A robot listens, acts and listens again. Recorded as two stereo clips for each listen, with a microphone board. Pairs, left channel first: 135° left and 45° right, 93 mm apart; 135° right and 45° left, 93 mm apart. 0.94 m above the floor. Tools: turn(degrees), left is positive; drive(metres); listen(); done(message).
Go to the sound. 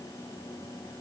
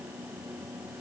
listen()
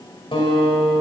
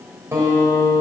turn(degrees=110)
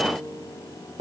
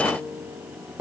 turn(degrees=-30)
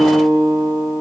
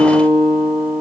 drive(metres=1.0)
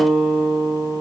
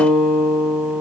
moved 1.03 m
drive(metres=1.0)
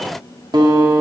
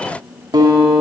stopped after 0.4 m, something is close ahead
done("Arrived at the guitar, straight ahead.")